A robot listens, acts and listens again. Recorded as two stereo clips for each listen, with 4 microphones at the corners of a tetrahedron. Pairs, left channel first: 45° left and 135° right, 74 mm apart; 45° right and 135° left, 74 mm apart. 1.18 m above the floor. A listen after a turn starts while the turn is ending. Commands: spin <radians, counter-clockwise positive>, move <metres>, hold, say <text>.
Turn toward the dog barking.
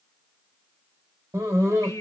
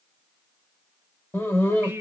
spin -1.75
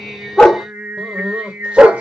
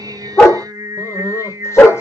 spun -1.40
spin -1.22
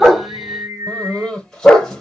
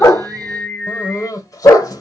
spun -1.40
spin -0.70
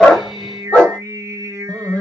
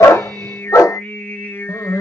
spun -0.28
spin -0.35
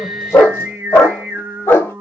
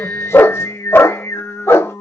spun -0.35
say Found it: a dog barking, straight ahead.